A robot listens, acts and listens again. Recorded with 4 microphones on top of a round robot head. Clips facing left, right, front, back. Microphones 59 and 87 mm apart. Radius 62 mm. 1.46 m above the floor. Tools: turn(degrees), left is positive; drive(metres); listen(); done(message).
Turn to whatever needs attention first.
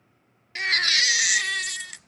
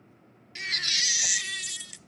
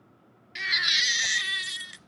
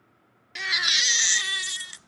turn(degrees=125)
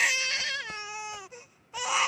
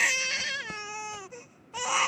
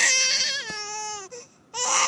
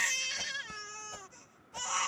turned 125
done("Facing the baby crying.")